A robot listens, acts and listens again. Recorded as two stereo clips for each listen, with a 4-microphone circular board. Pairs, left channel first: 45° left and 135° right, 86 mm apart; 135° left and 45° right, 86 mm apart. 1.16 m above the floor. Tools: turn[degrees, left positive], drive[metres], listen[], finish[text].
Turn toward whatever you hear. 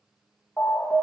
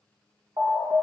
Thought: The alarm: 25° right.
Action: turn[-25]
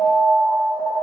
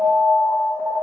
Action: finish[Found it: an alarm, straight ahead.]